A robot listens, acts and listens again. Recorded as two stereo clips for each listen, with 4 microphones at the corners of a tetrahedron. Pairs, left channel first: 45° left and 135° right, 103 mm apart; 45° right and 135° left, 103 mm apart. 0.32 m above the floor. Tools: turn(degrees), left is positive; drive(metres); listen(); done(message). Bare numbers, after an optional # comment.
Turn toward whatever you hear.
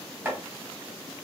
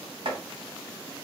# The chopping: 155° left.
turn(155)
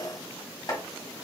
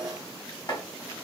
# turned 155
done("Facing the chopping, 1 to 2 m away.")